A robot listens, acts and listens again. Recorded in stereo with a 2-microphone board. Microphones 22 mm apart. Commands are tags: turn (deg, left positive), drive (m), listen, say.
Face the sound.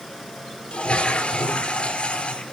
<turn deg="60"/>
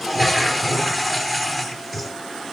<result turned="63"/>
<say>Found it: a toilet flushing, straight ahead, 2 to 4 m away.</say>